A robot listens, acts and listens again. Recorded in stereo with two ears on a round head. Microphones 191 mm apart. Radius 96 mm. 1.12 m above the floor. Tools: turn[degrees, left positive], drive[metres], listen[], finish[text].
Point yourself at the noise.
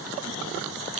Action: listen[]
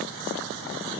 Action: listen[]
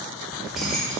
Action: turn[30]
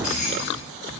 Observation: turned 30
Thought: So it is at 140° left.
Action: turn[140]
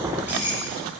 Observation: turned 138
Thought: The keys jangling is now 10° right.
Action: turn[-10]
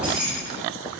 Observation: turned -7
Action: finish[Facing the keys jangling.]